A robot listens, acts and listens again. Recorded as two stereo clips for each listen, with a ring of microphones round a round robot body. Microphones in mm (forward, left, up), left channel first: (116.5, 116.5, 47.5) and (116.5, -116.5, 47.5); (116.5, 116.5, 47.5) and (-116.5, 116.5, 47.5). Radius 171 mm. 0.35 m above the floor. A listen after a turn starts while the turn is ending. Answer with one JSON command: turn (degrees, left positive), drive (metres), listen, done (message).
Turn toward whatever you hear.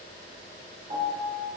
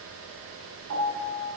{"turn": -165}
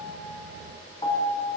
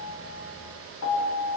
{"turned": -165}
{"turn": 20}
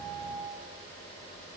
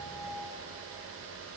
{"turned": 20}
{"listen": true}
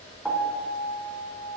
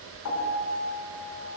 {"done": "Found it: a piano, straight ahead, 1 to 2 m away."}